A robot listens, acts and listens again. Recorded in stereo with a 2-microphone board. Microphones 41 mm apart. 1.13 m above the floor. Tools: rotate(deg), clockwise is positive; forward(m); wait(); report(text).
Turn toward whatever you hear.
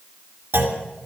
rotate(90)
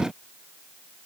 report("Facing where the clunk came from. I can't hear it now.")